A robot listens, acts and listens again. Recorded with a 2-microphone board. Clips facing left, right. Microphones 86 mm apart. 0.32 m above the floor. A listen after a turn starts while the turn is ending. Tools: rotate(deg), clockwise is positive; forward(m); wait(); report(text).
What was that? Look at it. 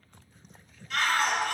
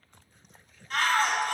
rotate(45)
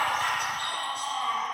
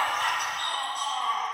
rotate(85)
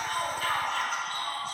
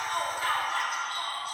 rotate(15)
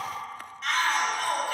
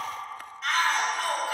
report("Found it: a shout, straight ahead, 2 to 4 m away.")